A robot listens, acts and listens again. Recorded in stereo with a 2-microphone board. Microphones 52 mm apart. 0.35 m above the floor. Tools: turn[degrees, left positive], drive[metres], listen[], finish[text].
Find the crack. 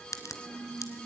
Action: turn[90]
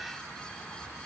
Action: finish[Facing where the crack came from. I can't hear it now.]